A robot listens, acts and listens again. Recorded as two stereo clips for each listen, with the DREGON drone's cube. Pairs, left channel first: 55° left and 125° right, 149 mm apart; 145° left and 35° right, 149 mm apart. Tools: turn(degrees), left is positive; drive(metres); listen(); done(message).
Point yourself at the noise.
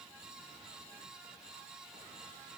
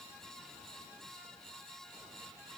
listen()
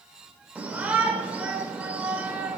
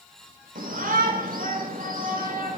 turn(degrees=-45)
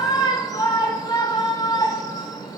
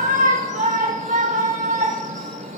turn(degrees=-10)
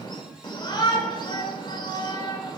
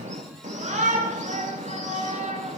done("Found it: a shout, straight ahead, 1 to 2 m away.")